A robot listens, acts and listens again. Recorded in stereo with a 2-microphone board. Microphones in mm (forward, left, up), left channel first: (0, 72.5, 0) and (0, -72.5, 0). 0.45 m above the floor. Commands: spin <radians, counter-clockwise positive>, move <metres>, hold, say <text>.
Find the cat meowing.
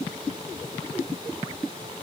hold
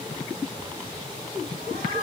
spin -1.57
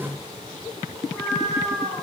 say Facing the cat meowing, 2 to 4 m away.